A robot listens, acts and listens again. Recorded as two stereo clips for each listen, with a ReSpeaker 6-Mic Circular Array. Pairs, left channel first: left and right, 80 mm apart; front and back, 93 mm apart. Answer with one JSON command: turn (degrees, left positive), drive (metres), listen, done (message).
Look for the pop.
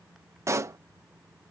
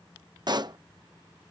{"turn": -140}
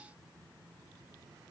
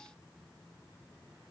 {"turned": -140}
{"done": "Facing where the pop came from. I can't hear it now."}